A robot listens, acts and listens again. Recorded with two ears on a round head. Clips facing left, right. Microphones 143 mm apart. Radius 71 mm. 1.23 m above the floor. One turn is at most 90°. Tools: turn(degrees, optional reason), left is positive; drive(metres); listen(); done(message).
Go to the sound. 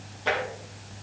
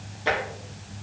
turn(degrees=-30)
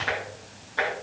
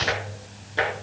turn(degrees=-90, reason="So it is at 145° right.")
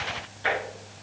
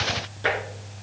turn(degrees=-60, reason="The tapping is now 60° right.")
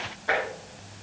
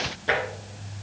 turn(degrees=-35, reason="The tapping is now 35° right.")
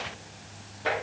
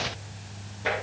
drive(metres=1.0)
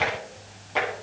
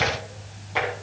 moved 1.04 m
drive(metres=1.0)
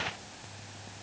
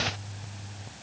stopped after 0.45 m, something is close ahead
listen()
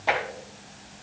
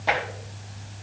done("I am next to the tapping.")